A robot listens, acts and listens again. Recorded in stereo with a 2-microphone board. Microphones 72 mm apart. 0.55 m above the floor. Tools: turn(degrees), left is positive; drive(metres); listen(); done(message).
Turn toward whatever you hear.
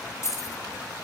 turn(degrees=45)
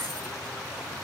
listen()
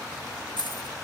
turn(degrees=90)
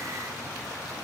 listen()
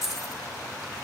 done("Found it: keys jangling, straight ahead, over 4 m away.")